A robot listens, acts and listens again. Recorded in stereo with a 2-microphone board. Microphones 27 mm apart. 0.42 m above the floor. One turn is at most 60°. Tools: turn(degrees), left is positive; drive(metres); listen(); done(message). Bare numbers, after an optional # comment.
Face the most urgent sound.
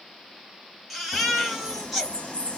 turn(30)
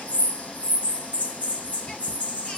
listen()
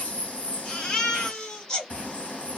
# So it is at 150° left.
turn(60)
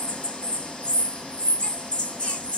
# Nothing new. It was at 90° left.
turn(60)
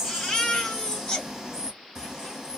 # The baby crying is now 40° left.
turn(40)
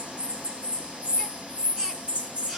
listen()
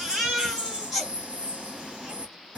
done("Facing the baby crying.")